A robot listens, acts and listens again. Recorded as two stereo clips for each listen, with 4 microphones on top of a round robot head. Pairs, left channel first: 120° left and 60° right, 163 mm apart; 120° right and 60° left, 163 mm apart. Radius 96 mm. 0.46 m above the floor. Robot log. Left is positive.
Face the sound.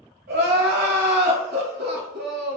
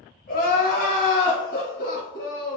note: The crying: 85° right.
cmd yaw -85
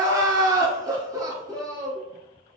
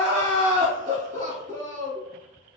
note: The crying is now 10° left.
cmd yaw +10
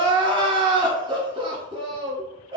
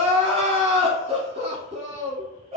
end: Facing the crying.